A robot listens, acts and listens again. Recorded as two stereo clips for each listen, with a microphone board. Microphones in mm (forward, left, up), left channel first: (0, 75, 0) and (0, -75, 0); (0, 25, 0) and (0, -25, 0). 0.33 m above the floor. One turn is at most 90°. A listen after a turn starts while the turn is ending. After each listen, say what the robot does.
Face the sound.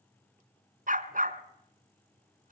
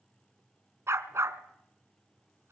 Turn 65° right.
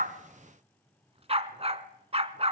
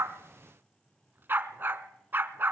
Turn 45° right.
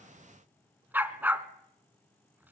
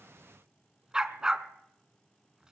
Turn 10° right.
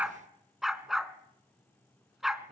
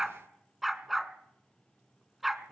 Found it: a dog barking, straight ahead, 1 to 2 m away.